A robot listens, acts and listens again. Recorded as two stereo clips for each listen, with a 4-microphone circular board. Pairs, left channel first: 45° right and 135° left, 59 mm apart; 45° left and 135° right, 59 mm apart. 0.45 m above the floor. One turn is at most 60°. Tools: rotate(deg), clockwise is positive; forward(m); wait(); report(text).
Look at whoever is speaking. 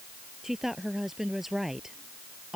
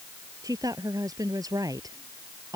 rotate(60)
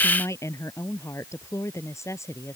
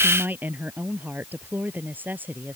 rotate(60)
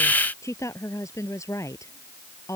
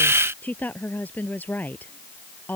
rotate(15)
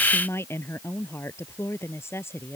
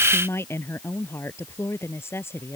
report("Facing the woman speaking.")